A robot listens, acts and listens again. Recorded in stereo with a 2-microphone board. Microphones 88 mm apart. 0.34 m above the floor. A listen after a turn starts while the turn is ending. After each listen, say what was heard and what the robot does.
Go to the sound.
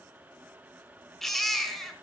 Turn 30° left.
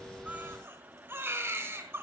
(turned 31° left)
So it is at 25° right. Turn 25° right.
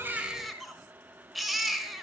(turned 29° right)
Drive 1.0 m forward.
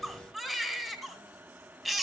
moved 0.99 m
Drive 1.0 m forward.
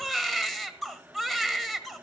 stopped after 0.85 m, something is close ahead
Arrived at the baby crying, straight ahead.